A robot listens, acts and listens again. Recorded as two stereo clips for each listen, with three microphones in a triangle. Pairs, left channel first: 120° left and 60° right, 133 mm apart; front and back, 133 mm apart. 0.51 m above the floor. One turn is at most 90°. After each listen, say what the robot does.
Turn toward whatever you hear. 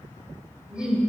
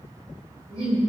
Turn 90° right.
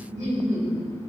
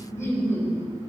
Turn 75° right.
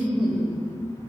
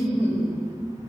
Turn 10° right.
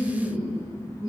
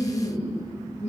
Turn 20° right.
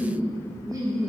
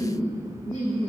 Found it: laughter, straight ahead.